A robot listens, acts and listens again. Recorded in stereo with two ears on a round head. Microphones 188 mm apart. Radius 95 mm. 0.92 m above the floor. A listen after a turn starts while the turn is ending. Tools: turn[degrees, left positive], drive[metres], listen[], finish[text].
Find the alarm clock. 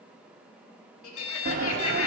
Thought: The alarm clock: about 65° left or 115° left.
Action: turn[65]
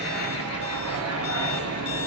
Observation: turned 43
Action: listen[]
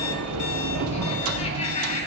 Action: listen[]
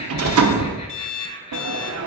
Thought: So it is at 65° left.
Action: turn[65]
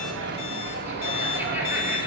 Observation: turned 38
Thought: Nothing new. It was at 25° left.
Action: turn[25]
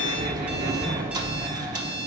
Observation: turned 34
Action: listen[]
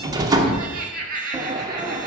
Action: finish[I heard an alarm clock from this way, but can't make it out now.]